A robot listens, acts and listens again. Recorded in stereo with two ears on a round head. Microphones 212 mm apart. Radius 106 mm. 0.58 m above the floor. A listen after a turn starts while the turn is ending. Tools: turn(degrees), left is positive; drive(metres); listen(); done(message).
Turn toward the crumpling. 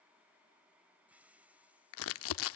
turn(degrees=60)
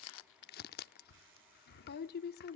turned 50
turn(degrees=50)
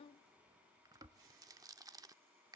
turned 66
turn(degrees=-15)
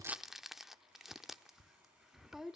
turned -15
done("Facing the crumpling.")